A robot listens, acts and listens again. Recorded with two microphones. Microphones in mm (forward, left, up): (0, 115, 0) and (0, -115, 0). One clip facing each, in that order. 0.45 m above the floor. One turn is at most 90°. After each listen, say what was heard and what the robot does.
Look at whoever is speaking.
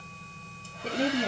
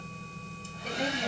The woman speaking: about 30° left or 150° left. Turn 30° left.
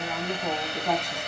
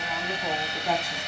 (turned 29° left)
Facing the woman speaking.